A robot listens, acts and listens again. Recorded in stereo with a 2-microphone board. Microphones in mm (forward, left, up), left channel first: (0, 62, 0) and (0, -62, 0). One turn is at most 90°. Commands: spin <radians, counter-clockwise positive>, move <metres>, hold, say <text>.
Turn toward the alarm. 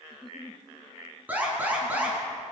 spin -0.52
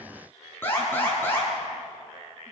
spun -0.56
spin 0.35
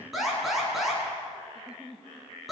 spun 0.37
say Facing the alarm, over 4 m away.